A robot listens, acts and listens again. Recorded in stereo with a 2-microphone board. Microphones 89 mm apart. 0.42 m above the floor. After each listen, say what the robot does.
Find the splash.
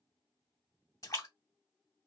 Turn 40° left.
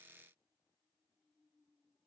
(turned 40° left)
Keep listening.
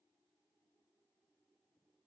I heard a splash, but can't make it out now. It was about straight ahead or 100° left.